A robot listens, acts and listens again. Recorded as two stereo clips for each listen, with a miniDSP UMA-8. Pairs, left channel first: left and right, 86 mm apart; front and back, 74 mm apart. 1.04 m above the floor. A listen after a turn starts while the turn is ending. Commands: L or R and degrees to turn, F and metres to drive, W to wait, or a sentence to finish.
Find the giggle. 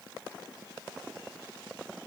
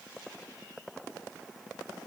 W
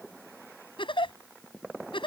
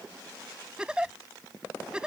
L105
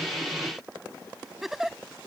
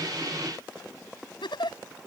Facing the giggle.